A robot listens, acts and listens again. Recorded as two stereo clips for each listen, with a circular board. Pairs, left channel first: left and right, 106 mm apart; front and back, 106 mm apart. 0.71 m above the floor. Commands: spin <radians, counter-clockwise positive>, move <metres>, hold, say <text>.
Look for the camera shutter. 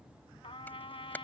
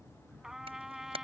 spin 2.79
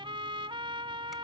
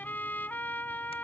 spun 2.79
hold
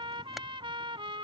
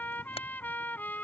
hold
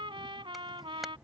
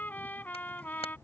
say Facing where the camera shutter came from. I can't hear it now.